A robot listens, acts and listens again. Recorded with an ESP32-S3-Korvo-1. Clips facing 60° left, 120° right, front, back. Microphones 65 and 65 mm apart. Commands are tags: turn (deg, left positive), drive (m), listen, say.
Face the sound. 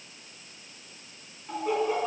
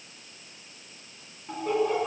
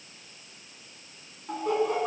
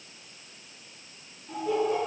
<turn deg="-25"/>
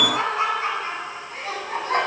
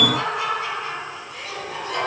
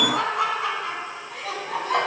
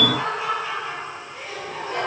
<turn deg="10"/>
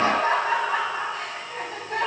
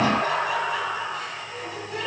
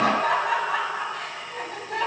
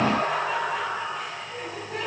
<turn deg="20"/>
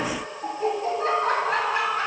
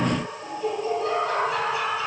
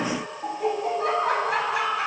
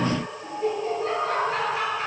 <turn deg="15"/>
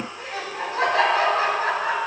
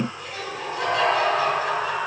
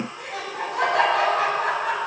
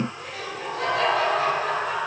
<say>Found it: laughter, straight ahead, 2 to 4 m away.</say>